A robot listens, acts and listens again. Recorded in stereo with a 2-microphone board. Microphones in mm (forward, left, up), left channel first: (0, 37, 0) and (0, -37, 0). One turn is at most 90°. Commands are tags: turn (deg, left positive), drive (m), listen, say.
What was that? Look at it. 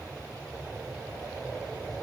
<listen/>
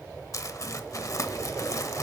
<turn deg="50"/>
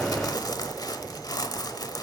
<turn deg="75"/>
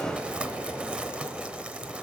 <turn deg="-15"/>
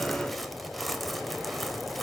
<say>Facing the crumpling, 1 to 2 m away.</say>